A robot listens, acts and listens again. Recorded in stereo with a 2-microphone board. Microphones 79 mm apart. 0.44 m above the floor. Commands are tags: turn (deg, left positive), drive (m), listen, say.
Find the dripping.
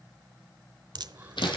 <turn deg="-60"/>
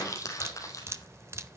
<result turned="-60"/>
<turn deg="-40"/>
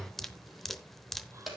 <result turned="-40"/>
<say>Found it: dripping, straight ahead, under 1 m away.</say>